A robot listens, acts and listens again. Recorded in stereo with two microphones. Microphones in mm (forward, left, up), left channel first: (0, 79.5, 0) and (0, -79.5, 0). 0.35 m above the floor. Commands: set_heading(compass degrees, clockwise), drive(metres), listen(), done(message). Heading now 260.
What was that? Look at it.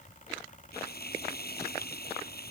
set_heading(170)
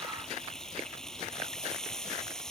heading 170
done("Facing the frying.")